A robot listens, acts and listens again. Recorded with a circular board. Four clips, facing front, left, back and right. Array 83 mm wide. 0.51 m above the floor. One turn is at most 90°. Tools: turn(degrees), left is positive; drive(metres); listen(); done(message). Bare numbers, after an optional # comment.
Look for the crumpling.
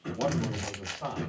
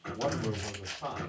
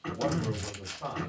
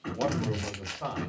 # The crumpling: 35° right.
turn(-35)
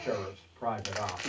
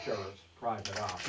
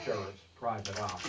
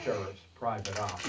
# The crumpling is now 15° right.
turn(-15)
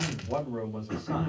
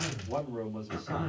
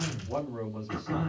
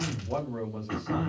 listen()
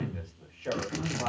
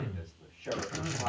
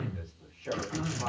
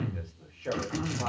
listen()
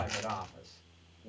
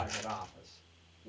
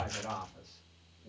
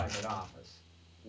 done("Facing the crumpling.")